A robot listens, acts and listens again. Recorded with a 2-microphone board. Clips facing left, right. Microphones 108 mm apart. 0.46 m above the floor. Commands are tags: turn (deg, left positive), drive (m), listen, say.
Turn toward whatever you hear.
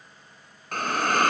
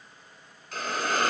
<turn deg="60"/>
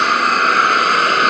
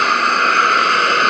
<say>Facing the hiss, 1 to 2 m away.</say>